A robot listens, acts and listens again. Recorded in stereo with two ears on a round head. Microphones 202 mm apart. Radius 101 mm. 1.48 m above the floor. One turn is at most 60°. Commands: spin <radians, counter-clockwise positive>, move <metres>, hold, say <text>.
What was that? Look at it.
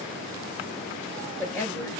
spin 0.52
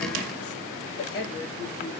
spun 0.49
spin 1.05
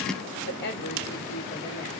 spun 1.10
spin 0.79
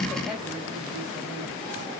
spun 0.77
hold
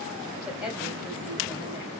say Found it: a woman speaking, straight ahead.